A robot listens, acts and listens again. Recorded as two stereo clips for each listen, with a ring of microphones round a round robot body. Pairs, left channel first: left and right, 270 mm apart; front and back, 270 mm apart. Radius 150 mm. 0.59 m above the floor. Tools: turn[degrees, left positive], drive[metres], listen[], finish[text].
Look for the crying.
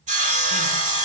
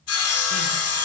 Action: listen[]
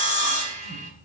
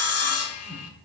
Action: listen[]
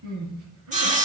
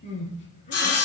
Thought: The crying: 65° right.
Action: turn[-65]
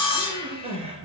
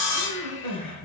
Thought: The crying is now 20° right.
Action: turn[-20]
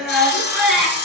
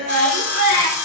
Action: finish[Found it: crying, straight ahead.]